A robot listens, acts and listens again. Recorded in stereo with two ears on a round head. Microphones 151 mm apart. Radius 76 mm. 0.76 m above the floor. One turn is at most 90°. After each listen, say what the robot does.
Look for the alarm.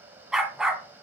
Keep listening.
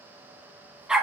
Keep listening.
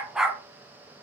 I can't make out an alarm to turn to.